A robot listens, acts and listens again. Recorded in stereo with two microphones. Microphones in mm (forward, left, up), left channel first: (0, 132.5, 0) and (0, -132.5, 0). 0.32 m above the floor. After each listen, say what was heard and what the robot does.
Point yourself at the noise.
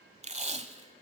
The tape being pulled: about 25° right or 155° right. Turn 25° right.
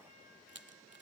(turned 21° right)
Keep listening.
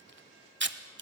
So it is at 130° right. Turn 130° right.
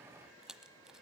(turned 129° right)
Keep listening.
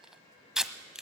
Facing the tape being pulled.